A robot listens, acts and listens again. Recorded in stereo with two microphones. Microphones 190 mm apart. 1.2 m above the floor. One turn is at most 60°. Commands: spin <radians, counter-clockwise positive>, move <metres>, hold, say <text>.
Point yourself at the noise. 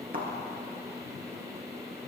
spin -0.96
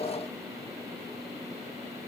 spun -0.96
hold
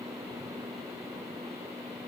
say I heard a thud, but can't make it out now. It was about straight ahead or 70° right.